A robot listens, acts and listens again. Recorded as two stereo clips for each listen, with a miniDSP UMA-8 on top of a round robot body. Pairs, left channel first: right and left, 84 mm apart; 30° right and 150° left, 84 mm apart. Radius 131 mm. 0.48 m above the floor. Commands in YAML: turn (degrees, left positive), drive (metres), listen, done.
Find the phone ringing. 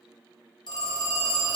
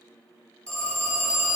turn: -110
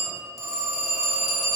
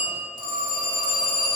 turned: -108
done: "Facing the phone ringing, 1 to 2 m away."